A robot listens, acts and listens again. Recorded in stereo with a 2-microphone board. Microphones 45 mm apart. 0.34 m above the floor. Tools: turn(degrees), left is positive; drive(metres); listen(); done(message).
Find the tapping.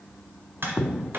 turn(degrees=-55)
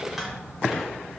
done("Facing the tapping, 1 to 2 m away.")